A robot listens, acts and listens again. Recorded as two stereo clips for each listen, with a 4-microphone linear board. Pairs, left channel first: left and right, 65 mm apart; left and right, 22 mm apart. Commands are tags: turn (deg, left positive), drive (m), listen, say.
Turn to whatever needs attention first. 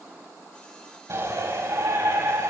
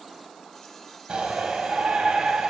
<turn deg="-50"/>
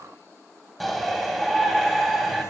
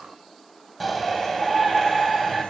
<say>Facing the shout, over 4 m away.</say>